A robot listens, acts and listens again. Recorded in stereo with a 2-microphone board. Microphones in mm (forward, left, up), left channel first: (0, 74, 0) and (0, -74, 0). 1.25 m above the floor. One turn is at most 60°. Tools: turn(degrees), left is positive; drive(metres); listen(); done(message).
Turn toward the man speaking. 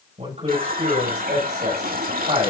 turn(degrees=-50)
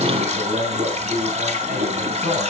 turn(degrees=-60)
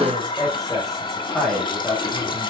done("Found it: a man speaking, straight ahead, over 4 m away.")